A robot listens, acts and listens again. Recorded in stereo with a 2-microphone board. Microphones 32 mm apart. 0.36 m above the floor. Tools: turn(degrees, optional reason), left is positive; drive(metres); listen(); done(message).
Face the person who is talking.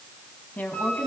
turn(degrees=70, reason="The woman speaking: about 70° left or 110° left.")
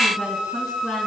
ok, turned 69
listen()
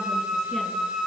listen()
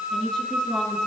turn(degrees=20, reason="So it is at 20° left.")
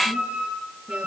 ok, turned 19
listen()
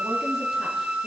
listen()
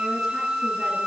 done("Facing where the woman speaking came from. I can't hear it now.")